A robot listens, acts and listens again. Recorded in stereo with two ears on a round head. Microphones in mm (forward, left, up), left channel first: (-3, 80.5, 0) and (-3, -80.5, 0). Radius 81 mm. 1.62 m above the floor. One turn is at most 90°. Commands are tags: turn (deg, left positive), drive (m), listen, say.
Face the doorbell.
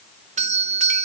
<turn deg="-40"/>
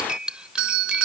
<turn deg="-90"/>
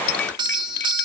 <turn deg="-25"/>
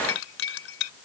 <listen/>
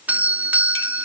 <turn deg="-10"/>
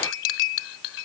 <listen/>
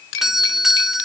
<say>Found it: a doorbell, straight ahead.</say>